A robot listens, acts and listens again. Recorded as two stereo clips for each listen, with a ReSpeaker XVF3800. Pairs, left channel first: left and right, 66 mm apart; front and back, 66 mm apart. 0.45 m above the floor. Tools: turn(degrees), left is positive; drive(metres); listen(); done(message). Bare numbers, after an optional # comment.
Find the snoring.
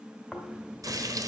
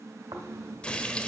# The snoring: 175° left.
turn(175)
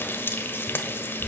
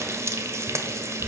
# The snoring is now 30° left.
turn(30)
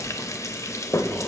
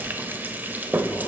listen()
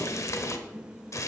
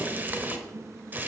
listen()
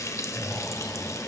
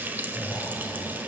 # The snoring is now 10° left.
turn(10)
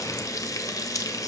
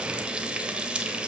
listen()
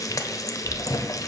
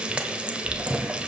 done("Facing the snoring, 1 to 2 m away.")